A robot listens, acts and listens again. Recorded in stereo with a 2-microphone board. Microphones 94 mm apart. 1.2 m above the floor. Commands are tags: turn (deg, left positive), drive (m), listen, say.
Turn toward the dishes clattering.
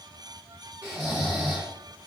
<listen/>
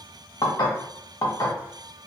<turn deg="45"/>
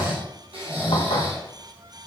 <listen/>
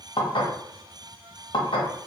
<turn deg="85"/>
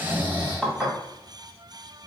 <say>Facing the dishes clattering, under 1 m away.</say>